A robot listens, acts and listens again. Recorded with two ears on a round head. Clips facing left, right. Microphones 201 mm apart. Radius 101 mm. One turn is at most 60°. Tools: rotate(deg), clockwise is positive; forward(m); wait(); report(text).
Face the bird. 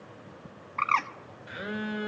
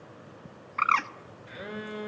rotate(15)
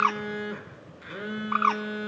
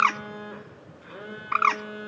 rotate(60)
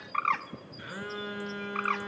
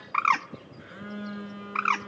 rotate(60)
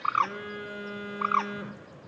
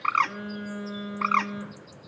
rotate(35)
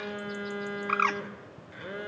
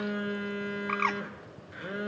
rotate(-10)
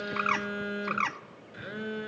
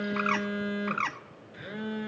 report("Facing the bird.")